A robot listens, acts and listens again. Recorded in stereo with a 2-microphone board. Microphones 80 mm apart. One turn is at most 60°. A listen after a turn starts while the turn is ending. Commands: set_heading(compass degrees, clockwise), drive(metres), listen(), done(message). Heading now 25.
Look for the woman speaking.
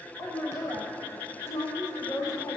set_heading(345)
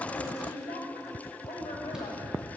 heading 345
set_heading(285)
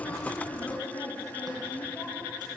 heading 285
set_heading(260)
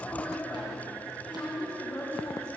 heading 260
set_heading(250)
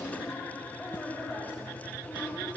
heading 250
done("Found it: a woman speaking, straight ahead.")